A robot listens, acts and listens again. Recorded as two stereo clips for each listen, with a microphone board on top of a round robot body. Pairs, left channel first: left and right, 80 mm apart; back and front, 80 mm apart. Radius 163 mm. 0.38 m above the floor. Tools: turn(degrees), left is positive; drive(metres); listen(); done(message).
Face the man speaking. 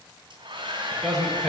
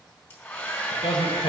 turn(degrees=180)
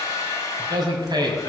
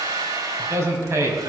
turn(degrees=-55)
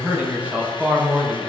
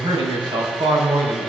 turn(degrees=-20)
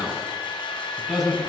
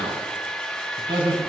done("Facing the man speaking.")